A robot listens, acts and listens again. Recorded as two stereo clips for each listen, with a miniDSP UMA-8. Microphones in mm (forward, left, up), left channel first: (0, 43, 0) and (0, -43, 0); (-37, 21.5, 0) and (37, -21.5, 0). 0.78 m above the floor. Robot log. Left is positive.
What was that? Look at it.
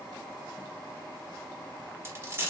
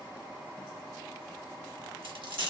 note: The dropped coin: 30° right.
cmd yaw -30
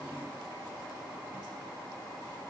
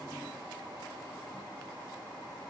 end: I heard a dropped coin from this way, but can't make it out now.